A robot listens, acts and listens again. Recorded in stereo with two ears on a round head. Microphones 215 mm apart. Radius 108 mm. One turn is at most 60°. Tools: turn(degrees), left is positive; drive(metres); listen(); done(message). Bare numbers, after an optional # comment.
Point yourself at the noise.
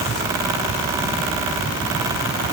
listen()
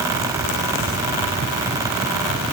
listen()
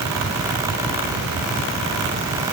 done("I can't make out anything.")